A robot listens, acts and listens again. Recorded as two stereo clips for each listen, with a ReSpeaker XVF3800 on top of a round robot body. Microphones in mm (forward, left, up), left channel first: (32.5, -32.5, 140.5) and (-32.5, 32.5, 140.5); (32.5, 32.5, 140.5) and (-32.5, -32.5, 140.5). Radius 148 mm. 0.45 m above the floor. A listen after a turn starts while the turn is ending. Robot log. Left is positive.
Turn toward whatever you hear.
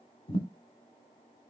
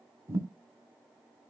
note: The thud: 75° right.
cmd yaw -75
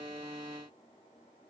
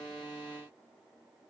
end: I heard a thud from this way, but can't make it out now.